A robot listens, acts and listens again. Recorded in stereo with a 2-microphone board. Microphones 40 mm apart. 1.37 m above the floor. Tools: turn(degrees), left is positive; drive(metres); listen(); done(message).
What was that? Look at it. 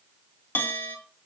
turn(degrees=65)
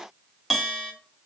done("Found it: a bell, straight ahead.")